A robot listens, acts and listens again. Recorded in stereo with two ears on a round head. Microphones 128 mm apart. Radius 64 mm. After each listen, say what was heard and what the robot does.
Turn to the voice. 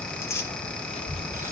The child speaking: about 40° left or 140° left. Turn 40° left.
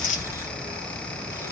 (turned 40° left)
So it is at 110° left. Turn 110° left.
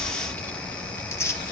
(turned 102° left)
The child speaking is now 15° left. Turn 15° left.
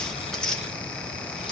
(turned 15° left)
Keep listening.
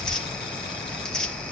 Found it: a child speaking, straight ahead.